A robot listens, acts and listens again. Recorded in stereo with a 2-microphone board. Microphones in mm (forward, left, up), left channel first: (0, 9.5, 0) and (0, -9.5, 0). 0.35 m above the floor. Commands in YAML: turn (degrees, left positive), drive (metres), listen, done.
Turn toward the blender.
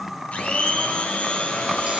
turn: 90
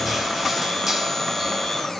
done: "Facing the blender, over 4 m away."